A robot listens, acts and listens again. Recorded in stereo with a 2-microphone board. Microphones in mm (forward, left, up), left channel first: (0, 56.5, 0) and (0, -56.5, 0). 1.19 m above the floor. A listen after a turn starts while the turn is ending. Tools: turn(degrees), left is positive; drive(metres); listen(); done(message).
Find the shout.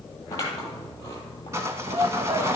turn(degrees=-60)
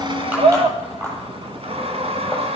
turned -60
turn(degrees=-55)
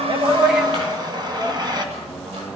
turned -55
listen()
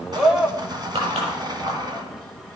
done("Facing the shout, 1 to 2 m away.")